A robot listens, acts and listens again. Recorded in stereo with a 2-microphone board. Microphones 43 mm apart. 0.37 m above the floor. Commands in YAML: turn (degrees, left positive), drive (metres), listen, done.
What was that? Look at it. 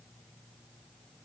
listen: true
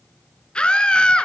turn: 25
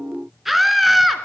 done: "Found it: a scream, straight ahead, over 4 m away."